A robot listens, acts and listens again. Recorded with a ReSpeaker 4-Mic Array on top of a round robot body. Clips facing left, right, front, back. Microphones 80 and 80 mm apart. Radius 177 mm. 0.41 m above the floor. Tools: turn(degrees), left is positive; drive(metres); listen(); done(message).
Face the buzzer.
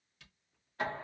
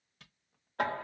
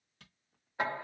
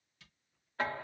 listen()
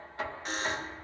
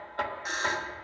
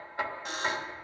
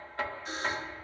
turn(degrees=-10)
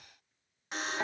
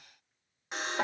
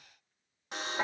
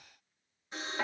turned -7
done("Found it: a buzzer, straight ahead, 1 to 2 m away.")